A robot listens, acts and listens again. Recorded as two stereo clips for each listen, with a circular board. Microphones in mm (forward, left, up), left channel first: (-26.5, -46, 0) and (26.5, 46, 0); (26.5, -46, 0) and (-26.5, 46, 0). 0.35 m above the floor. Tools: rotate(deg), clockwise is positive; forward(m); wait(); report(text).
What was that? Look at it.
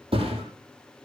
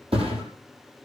rotate(-90)
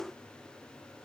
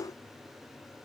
report("Facing where the thud came from. I can't hear it now.")